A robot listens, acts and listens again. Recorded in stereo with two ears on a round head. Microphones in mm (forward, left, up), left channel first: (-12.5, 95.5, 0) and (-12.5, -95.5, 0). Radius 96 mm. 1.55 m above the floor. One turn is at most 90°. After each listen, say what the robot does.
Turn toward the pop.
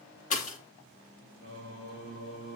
Turn 35° left.
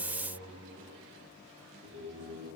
Keep listening.
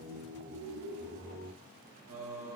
I heard a pop, but can't make it out now. It was about straight ahead or 110° left.